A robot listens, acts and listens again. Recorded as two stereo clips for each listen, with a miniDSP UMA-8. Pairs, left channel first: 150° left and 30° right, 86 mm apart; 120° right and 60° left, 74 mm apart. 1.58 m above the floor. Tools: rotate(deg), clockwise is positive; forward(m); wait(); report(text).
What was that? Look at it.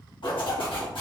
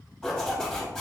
rotate(-160)
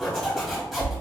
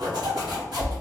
rotate(-65)
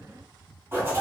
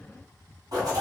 rotate(-35)
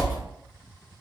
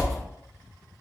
rotate(-10)
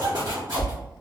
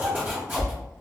report("Found it: a zipper, straight ahead, 1 to 2 m away.")